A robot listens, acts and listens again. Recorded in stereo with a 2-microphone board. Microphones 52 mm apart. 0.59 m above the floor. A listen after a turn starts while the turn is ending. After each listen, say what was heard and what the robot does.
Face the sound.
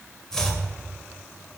Turn 30° left.
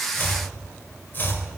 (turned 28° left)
So it is at 140° left. Turn 140° left.
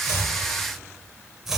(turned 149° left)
Facing the chopping.